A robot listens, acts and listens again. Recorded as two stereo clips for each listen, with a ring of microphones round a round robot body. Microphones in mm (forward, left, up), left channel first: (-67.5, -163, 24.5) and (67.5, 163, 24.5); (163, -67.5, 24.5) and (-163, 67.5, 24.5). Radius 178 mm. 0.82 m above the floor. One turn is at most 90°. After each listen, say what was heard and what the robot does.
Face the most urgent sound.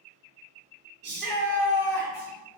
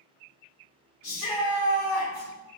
Facing the shout.